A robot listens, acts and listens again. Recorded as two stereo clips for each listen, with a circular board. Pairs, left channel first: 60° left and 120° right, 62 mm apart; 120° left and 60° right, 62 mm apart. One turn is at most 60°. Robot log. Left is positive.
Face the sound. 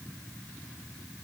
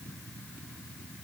cmd idle
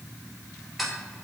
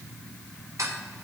note: The ticking: 30° right.
cmd yaw -30
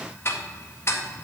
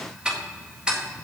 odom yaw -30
note: The ticking is now 15° left.
cmd yaw +15
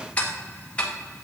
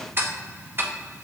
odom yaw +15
note: The ticking is now 10° right.
cmd yaw -10
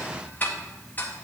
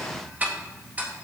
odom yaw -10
end: Facing the ticking.